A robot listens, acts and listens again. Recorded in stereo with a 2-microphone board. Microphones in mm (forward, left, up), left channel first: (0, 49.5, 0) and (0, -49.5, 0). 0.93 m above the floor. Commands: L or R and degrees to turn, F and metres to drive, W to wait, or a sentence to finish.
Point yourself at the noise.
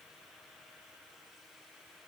W
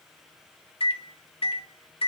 L65
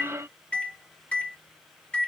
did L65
L10
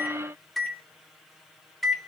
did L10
Found it: a microwave, straight ahead.